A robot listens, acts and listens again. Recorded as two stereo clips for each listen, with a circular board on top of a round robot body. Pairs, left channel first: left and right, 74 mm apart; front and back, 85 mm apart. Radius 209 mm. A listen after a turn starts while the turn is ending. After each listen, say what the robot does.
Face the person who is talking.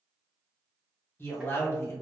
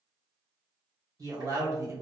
Turn 135° left.
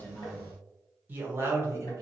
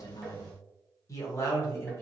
Turn 55° right.
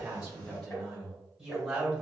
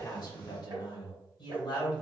Turn 10° right.
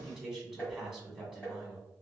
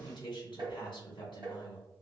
Found it: a man speaking, straight ahead.